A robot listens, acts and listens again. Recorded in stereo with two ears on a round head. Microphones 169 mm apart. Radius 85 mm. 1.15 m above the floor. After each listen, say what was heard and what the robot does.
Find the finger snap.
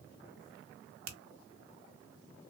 The finger snap: about 75° right or 105° right. Turn 75° right.
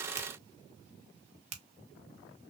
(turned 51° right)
So it is at 40° right. Turn 40° right.
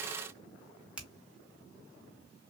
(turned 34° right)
Found it: a finger snap, straight ahead, under 1 m away.